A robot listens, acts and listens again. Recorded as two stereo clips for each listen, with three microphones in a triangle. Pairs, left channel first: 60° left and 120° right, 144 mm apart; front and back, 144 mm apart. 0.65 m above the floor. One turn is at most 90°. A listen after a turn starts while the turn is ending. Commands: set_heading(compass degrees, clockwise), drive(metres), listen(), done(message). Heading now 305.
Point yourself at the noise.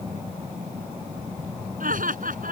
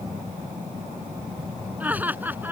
set_heading(35)
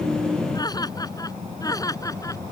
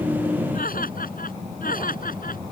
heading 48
done("Found it: laughter, straight ahead.")